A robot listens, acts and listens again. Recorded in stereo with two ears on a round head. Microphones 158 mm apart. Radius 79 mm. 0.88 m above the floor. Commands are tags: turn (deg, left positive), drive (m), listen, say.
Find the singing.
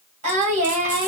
<turn deg="-45"/>
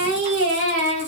<turn deg="-90"/>
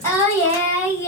<turn deg="15"/>
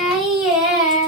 <say>Found it: singing, straight ahead, 1 to 2 m away.</say>